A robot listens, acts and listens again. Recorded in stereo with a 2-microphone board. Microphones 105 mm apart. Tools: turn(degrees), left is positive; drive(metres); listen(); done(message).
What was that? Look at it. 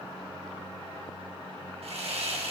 turn(degrees=-75)
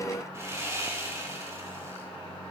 turn(degrees=-30)
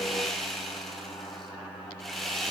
done("Facing the sawing.")